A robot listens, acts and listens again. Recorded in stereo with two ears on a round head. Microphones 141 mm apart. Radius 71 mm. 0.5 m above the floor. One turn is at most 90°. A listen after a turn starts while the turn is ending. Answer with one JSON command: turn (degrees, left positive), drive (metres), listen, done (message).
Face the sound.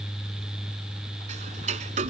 {"turn": -50}
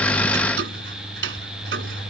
{"turn": -80}
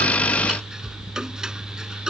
{"done": "Found it: ticking, straight ahead."}